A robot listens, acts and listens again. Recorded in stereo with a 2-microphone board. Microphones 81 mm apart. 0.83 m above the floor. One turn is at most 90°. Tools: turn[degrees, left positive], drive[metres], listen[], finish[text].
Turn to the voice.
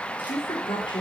Action: turn[90]
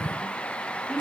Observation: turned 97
Action: listen[]
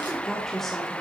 Action: finish[Facing the woman speaking.]